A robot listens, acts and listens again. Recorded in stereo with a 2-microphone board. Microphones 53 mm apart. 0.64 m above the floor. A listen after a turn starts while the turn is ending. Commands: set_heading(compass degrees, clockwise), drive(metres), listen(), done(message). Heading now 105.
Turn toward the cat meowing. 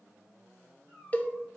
set_heading(90)
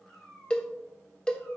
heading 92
set_heading(72)
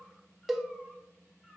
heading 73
listen()
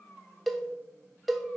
set_heading(53)
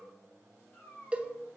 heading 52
set_heading(22)
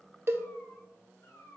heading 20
set_heading(265)
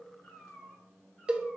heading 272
set_heading(262)
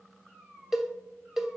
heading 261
done("Facing the cat meowing, over 4 m away.")